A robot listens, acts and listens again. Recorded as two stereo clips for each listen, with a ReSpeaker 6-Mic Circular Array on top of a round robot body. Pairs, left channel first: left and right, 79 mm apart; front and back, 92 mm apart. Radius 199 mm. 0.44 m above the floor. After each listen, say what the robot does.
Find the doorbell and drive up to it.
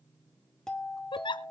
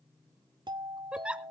Turn 170° left.
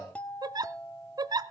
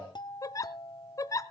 Turn 20° left.
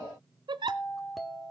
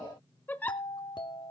Drive 1.0 m forward.
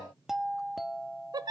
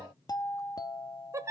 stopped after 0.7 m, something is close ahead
I am next to the doorbell.